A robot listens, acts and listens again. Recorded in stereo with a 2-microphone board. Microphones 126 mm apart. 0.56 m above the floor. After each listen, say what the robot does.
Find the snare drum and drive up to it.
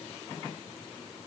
Keep listening.
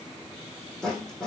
Turn 30° left.
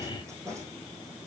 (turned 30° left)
Turn 25° right.
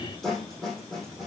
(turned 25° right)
Drive 1.0 m forward.
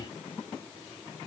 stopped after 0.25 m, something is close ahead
Keep listening.
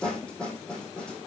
Turn 10° left.
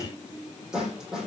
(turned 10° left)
Blocked. The snare drum is further on, straight ahead.